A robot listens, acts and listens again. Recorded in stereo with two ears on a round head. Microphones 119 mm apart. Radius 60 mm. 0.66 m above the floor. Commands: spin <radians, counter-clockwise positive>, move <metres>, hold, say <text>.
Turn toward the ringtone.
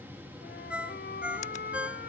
spin -0.52
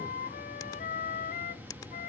hold
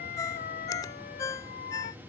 spin 0.44
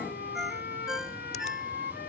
say Found it: a ringtone, straight ahead.